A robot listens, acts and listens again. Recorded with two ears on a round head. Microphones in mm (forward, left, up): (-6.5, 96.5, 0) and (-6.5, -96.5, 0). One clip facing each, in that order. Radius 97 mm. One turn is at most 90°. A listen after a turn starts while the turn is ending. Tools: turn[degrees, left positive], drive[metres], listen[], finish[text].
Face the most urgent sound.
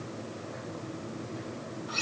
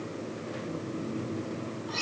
Action: listen[]
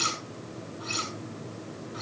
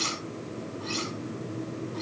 Action: listen[]
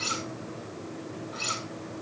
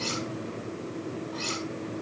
Action: finish[I can't make out anything urgent, only cutlery clinking.]